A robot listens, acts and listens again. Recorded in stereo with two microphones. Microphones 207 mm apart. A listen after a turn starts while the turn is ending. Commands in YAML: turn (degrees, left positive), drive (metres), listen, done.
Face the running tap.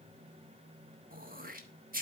listen: true
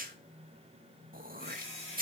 turn: 30
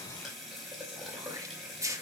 done: "Facing the running tap."